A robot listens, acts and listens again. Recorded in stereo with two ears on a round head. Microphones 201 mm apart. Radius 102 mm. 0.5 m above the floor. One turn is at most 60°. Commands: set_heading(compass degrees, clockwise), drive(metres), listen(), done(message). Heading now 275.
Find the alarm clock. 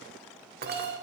set_heading(320)
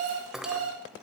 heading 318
set_heading(18)
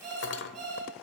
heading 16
set_heading(46)
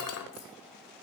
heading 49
listen()
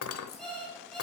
done("Facing the alarm clock, over 4 m away.")